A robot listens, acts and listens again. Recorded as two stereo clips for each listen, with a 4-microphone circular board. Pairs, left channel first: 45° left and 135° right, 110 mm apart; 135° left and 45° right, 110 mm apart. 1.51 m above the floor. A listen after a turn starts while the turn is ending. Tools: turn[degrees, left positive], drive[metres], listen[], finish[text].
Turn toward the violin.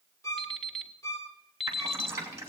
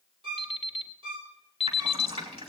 Thought: The violin: 15° right.
Action: turn[-15]
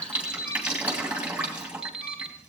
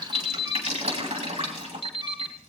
Action: listen[]
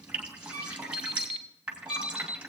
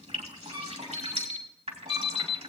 Action: finish[Facing the violin, 2 to 4 m away.]